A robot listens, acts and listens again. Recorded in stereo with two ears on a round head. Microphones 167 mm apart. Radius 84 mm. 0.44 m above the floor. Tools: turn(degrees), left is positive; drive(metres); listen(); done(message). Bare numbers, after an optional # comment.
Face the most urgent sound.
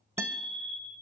turn(-30)
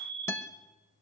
# So it is at 145° right.
turn(-145)
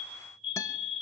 done("Found it: a fire alarm, straight ahead, over 4 m away.")